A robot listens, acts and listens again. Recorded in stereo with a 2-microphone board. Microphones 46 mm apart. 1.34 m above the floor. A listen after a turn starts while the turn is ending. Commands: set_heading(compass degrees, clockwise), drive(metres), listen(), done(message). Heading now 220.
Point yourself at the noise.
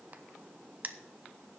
set_heading(260)
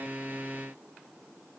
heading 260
listen()
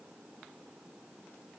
done("I heard a crack, but can't make it out now. It was about straight ahead or 100° right.")